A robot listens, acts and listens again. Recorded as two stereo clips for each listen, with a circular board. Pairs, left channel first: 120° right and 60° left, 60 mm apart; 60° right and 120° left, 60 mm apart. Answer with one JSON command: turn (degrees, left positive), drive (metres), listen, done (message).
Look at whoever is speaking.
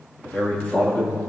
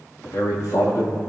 {"turn": -60}
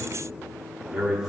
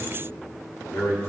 {"turn": -15}
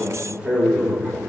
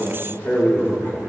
{"turn": -10}
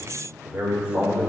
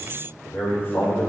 {"turn": -10}
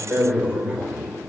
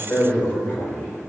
{"done": "Found it: a man speaking, straight ahead."}